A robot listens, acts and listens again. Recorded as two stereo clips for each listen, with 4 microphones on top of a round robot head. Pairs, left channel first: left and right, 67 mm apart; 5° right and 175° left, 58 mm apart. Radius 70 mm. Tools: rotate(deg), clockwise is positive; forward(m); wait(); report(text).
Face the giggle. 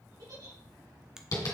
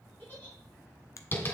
rotate(65)
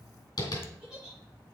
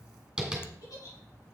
rotate(10)
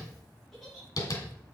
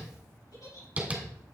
report("Facing the giggle, over 4 m away.")